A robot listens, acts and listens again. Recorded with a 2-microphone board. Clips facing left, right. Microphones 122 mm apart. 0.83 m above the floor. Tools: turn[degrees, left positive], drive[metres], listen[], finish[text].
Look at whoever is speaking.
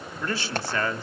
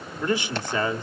Thought: The man speaking: about 15° right or 165° right.
Action: turn[-15]
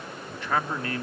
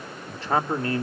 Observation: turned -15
Thought: So it is at 150° right.
Action: turn[-150]
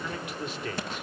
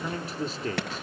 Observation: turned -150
Thought: The man speaking is now 35° right.
Action: turn[-35]
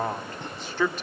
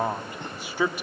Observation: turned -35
Thought: The man speaking is now 10° right.
Action: turn[-10]
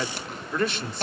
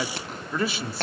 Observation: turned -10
Action: finish[Facing the man speaking.]